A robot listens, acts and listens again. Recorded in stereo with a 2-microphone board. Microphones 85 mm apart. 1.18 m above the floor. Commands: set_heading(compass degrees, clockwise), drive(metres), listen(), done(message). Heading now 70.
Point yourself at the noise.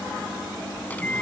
set_heading(50)
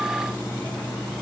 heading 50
listen()
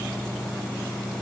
listen()
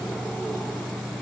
done("Facing the microwave.")